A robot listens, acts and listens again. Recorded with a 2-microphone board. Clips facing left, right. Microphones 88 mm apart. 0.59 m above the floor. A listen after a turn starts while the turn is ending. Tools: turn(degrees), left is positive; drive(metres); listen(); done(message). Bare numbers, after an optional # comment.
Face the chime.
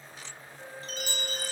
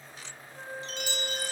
# The chime: about 45° left or 135° left.
turn(45)
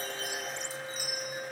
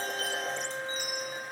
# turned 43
done("Facing the chime, 2 to 4 m away.")